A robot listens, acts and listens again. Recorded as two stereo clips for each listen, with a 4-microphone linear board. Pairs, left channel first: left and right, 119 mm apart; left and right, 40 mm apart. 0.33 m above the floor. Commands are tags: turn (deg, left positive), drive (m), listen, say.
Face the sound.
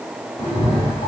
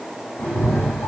<turn deg="60"/>
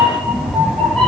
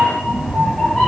<turn deg="15"/>
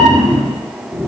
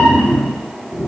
<say>Found it: a cat meowing, straight ahead, 1 to 2 m away.</say>